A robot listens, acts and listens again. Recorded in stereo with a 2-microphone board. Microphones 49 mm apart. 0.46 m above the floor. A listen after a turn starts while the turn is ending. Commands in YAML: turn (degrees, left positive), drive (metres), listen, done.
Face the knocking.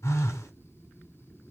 listen: true
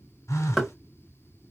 turn: -30
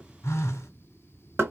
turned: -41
turn: -130
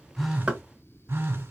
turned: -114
turn: -15
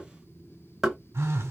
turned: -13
done: "Facing the knocking."